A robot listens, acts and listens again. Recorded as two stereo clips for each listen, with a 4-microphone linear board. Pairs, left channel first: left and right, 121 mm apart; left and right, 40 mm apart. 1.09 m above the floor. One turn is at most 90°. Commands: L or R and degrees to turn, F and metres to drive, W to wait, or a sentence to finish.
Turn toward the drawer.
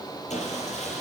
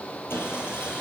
W
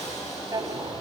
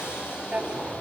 R35
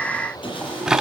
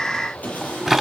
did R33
Found it: a drawer, straight ahead.